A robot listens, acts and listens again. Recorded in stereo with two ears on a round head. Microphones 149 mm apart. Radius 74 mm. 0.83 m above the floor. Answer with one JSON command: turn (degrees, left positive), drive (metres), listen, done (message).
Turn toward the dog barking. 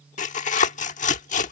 {"listen": true}
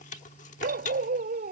{"turn": -50}
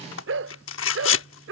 {"turn": -80}
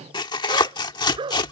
{"turn": -30}
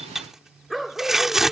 {"done": "Facing the dog barking."}